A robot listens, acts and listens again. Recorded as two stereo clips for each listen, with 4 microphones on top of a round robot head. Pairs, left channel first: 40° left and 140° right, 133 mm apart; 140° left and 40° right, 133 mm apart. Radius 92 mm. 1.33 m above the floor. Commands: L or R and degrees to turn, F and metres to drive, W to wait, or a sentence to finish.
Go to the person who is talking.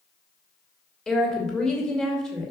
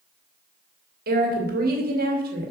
R45
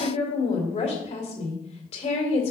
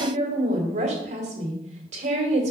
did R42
F1.0
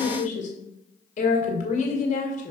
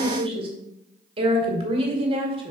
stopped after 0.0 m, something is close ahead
L10
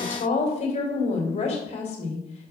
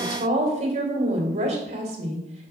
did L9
Blocked. The woman speaking is further on, straight ahead.